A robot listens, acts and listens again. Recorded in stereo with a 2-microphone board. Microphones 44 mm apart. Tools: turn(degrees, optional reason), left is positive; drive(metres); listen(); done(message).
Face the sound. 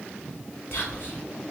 turn(degrees=60, reason="The whispering: about 60° left or 120° left.")
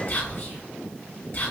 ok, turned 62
turn(degrees=55, reason="So it is at 55° left.")
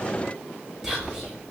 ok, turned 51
done("Found it: whispering, straight ahead.")